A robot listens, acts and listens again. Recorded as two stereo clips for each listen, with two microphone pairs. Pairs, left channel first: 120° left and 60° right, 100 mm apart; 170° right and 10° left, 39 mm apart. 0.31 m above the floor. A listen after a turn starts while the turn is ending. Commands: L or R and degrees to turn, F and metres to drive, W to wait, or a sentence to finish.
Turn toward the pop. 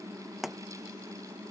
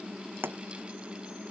L30
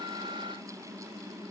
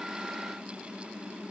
I heard a pop from this way, but can't make it out now.